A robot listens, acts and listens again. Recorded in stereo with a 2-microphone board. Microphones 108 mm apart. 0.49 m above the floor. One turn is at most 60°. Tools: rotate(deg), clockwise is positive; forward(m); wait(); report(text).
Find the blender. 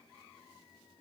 wait()
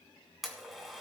rotate(-30)
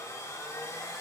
rotate(-60)
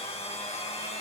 rotate(-60)
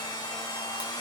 rotate(-45)
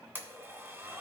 rotate(20)
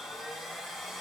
report("Facing the blender.")